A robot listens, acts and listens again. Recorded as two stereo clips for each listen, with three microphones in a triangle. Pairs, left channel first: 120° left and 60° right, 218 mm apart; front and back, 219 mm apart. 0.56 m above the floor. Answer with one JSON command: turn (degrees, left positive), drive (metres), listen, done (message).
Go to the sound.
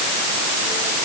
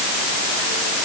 {"listen": true}
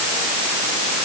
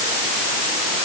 {"listen": true}
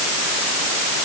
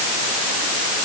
{"done": "I can't make out anything."}